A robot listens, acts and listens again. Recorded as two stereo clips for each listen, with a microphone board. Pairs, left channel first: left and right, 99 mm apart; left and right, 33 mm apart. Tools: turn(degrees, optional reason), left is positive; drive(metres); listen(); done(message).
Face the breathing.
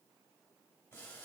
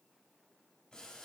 listen()
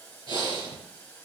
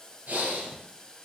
turn(degrees=-50, reason="The breathing: about 50° right or 130° right.")
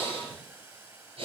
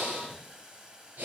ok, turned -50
turn(degrees=-80, reason="So it is at 80° right.")
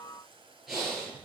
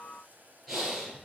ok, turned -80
done("Facing the breathing.")